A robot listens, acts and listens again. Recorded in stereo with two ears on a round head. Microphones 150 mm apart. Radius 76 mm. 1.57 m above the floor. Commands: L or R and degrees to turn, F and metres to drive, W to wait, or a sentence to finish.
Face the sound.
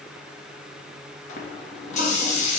L45
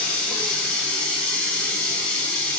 L10
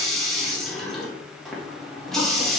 Found it: a running tap, straight ahead, 1 to 2 m away.